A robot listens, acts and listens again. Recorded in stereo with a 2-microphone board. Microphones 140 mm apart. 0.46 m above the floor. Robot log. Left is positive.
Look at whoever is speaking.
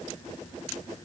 cmd idle
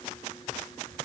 cmd idle
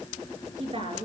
note: The woman speaking: about 40° right or 140° right.
cmd yaw -40
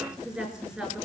end: Found it: a woman speaking, straight ahead.